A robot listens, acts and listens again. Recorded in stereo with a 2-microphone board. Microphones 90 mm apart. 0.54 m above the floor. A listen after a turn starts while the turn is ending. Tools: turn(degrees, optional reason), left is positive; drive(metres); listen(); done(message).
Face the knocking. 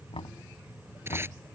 turn(degrees=75, reason="The knocking: about 75° left or 105° left.")
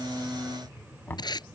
turn(degrees=25, reason="So it is at 25° left.")
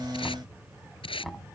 done("Facing the knocking.")